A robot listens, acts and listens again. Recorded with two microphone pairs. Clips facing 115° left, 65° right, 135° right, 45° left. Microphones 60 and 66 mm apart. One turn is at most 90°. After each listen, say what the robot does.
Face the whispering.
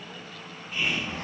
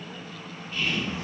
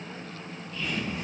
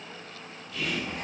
Turn 45° left.
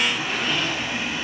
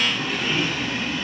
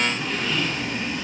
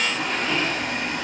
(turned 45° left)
Keep listening.
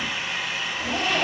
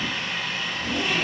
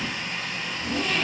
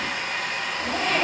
Keep listening.
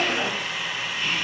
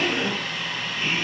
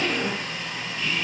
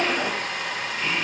Facing the whispering, 1 to 2 m away.